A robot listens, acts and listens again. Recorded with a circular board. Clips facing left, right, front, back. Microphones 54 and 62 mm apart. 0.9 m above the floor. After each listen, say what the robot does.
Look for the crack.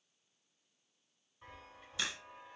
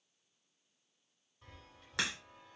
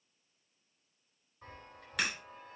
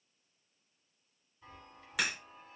Turn 95° right.
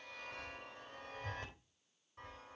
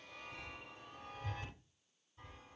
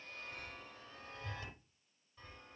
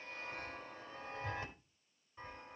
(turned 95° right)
I heard a crack from this way, but can't make it out now.